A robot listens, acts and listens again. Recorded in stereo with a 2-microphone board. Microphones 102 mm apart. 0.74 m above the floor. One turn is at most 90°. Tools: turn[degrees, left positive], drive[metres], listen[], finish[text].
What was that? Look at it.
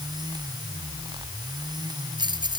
Thought: The keys jangling: about 45° right or 135° right.
Action: turn[-45]
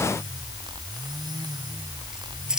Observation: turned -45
Action: finish[Found it: keys jangling, straight ahead.]